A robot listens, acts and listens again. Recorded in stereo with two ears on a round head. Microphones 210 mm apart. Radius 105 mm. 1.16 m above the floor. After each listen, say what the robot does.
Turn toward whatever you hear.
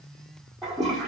Turn 30° left.
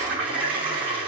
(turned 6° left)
Turn 30° right.
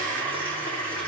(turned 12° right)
Facing the toilet flushing.